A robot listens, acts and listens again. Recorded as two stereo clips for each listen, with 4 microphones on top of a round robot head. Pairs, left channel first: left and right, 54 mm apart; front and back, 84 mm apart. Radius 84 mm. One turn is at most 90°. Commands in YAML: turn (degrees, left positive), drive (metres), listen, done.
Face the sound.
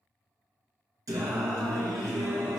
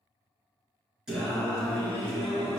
turn: -85
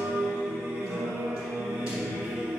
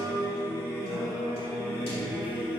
turn: -15
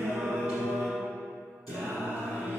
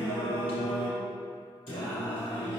done: "Facing the singing."